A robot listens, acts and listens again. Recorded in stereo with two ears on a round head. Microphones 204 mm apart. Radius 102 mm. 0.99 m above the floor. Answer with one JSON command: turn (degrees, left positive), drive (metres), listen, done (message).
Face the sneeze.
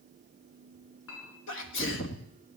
{"turn": 55}
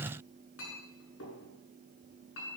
{"listen": true}
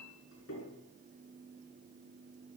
{"done": "I heard a sneeze, but can't make it out now. It was about straight ahead or 70° left."}